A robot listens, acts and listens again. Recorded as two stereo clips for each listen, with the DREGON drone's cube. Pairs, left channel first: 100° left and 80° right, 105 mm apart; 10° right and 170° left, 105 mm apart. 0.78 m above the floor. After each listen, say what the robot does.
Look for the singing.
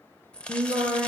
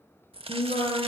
Turn 15° right.
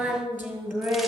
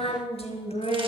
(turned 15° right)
Turn 10° right.
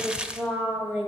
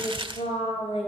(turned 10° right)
Found it: singing, straight ahead, 2 to 4 m away.